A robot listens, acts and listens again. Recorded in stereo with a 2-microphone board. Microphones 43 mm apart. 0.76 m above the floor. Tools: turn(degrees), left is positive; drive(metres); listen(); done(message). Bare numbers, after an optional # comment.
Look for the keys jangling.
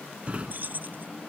# The keys jangling: about 40° right or 140° right.
turn(-40)
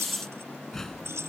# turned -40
# So it is at 100° right.
turn(-100)
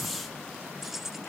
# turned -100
done("Facing the keys jangling.")